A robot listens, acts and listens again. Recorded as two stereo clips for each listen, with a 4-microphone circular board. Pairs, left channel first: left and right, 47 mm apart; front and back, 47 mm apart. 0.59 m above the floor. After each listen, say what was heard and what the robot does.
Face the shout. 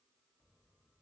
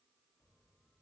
Keep listening.
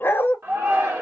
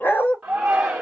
The shout: 105° right. Turn 105° right.
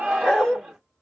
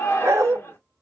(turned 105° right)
Facing the shout, 1 to 2 m away.